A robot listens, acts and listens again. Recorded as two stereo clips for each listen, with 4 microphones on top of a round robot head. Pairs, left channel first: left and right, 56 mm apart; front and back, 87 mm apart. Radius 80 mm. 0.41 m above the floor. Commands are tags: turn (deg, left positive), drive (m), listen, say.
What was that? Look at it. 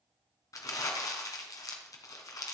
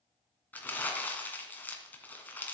<turn deg="70"/>
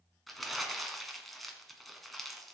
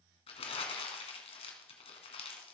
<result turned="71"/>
<say>Facing the crumpling.</say>